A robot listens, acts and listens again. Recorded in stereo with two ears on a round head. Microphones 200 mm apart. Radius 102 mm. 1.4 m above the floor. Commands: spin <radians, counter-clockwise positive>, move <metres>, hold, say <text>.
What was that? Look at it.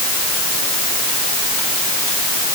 hold
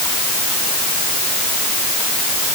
hold
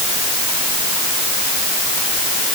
say I can't make out anything to turn to.